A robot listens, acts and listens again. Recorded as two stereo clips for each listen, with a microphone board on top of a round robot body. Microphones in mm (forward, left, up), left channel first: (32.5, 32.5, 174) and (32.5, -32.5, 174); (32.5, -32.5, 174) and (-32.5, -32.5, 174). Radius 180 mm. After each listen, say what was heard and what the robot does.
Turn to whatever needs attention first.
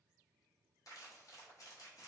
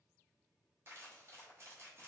Keep listening.
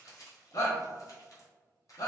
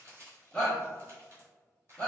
The shout: 90° left. Turn 90° left.
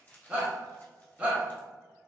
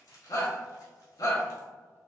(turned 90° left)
The shout is now 10° right. Turn 10° right.
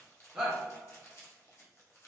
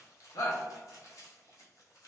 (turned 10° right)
Facing the shout.